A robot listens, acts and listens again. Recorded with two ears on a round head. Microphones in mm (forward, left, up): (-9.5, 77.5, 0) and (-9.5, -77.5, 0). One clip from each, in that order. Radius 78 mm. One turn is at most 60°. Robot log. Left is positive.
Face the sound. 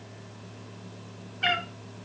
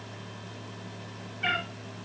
cmd yaw +60
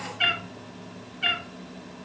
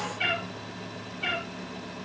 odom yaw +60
note: So it is at 35° left.
cmd yaw +35
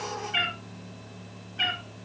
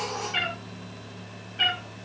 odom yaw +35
end: Facing the cat meowing.